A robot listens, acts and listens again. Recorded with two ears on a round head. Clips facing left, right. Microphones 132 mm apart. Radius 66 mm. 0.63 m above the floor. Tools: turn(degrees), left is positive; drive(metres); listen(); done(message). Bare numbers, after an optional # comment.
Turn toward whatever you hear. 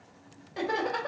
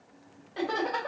turn(30)
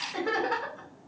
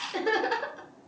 # So it is at 40° right.
turn(-40)
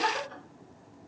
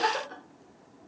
# The laughter is now 50° right.
turn(-50)
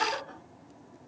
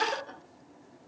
# The laughter is now 40° right.
turn(-40)
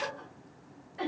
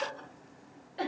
# The laughter is now 35° right.
turn(-35)
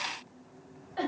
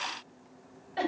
# The laughter is now 20° right.
turn(-20)
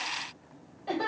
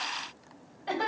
done("Found it: laughter, straight ahead, 2 to 4 m away.")